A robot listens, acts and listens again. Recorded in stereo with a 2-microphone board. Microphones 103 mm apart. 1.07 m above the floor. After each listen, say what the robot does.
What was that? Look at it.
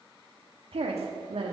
Turn 90° right.
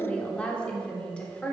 Turn 10° left.
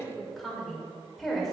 Found it: a woman speaking, straight ahead, over 4 m away.